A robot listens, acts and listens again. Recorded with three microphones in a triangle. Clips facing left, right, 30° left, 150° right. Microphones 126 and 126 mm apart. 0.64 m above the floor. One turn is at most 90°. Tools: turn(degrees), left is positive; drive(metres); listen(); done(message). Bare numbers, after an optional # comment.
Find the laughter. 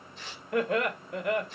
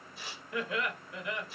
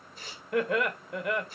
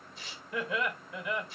# The laughter: 60° left.
turn(60)
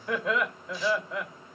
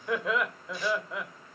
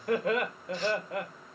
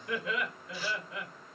done("Facing the laughter, 2 to 4 m away.")